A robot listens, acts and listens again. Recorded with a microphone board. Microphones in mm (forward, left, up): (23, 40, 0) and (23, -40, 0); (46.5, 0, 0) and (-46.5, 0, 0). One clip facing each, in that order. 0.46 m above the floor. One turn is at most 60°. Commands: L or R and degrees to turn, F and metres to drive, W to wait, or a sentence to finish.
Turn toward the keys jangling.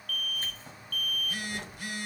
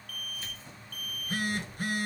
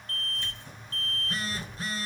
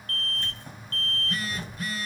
L60
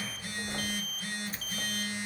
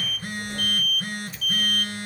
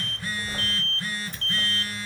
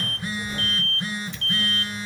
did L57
L45
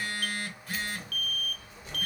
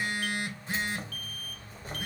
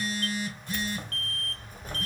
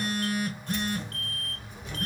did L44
R45
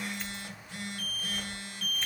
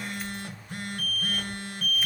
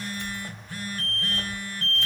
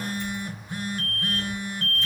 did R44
Found it: keys jangling, straight ahead.